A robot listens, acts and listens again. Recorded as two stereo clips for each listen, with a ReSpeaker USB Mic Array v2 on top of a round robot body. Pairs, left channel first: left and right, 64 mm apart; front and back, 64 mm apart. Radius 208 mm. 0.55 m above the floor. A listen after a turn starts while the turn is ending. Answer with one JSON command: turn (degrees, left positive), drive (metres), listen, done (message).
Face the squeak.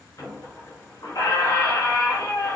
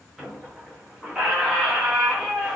{"turn": 100}
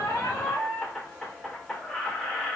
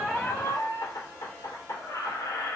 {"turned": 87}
{"turn": 10}
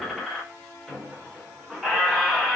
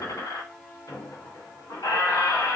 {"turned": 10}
{"done": "Found it: a squeak, straight ahead."}